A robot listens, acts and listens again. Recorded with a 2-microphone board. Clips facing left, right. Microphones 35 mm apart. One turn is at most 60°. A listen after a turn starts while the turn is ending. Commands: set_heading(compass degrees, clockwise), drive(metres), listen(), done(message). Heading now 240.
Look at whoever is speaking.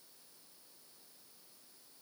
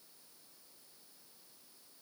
listen()
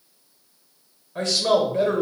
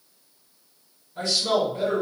set_heading(180)
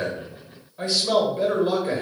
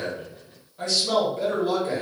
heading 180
set_heading(155)
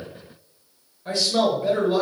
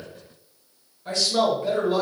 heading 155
set_heading(145)
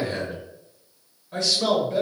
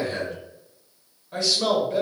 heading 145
done("Found it: a man speaking, straight ahead, 1 to 2 m away.")